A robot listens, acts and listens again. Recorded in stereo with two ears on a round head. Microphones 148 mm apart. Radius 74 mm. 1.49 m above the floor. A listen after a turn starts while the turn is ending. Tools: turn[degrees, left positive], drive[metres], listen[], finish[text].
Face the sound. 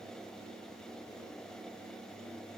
Action: listen[]
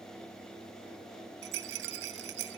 Action: turn[-90]
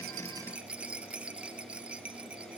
Thought: So it is at 10° right.
Action: turn[-10]
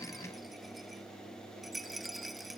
Action: finish[Facing the rattle.]